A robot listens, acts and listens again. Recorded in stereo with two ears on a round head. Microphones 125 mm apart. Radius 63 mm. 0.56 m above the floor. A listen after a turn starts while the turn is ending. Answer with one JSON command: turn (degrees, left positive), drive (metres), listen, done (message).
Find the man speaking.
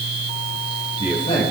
{"turn": 35}
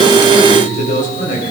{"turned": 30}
{"turn": 120}
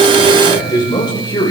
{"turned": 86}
{"turn": 30}
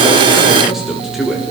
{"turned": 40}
{"done": "Found it: a man speaking, straight ahead."}